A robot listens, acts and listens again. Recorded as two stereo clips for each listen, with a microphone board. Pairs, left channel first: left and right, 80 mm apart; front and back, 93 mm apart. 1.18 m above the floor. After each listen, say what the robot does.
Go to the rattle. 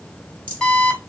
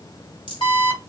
Turn 20° right.
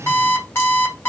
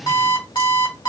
Keep listening.
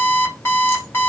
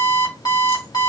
Keep listening.
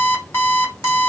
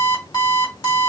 I heard a rattle from this way, but can't make it out now. I did not reach it.